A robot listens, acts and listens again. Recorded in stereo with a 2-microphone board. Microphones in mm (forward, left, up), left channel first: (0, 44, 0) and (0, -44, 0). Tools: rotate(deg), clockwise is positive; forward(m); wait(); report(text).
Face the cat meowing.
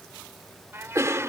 rotate(30)
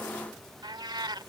rotate(120)
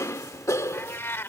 rotate(-30)
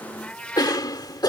rotate(-15)
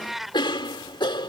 report("Found it: a cat meowing, straight ahead.")